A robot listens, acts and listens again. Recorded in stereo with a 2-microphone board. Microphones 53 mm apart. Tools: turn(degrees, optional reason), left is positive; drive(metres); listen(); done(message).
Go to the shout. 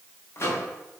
listen()
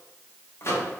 listen()
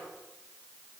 done("I can't make out a shout to turn to.")